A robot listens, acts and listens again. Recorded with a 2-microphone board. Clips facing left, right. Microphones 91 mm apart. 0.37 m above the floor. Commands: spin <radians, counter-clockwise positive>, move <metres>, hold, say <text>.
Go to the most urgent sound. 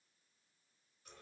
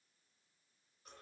hold
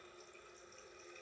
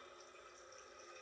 hold
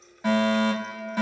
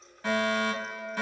spin 0.26
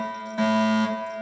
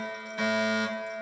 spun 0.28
spin 2.62
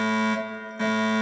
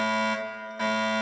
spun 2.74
spin -0.17
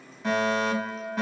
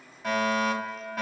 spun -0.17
move 1.0
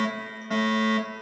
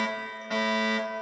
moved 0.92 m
move 1.0
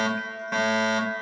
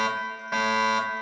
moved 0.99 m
move 1.0
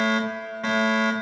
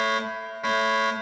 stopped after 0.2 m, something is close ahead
spin -0.17
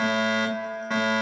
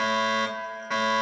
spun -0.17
say I am next to the fire alarm.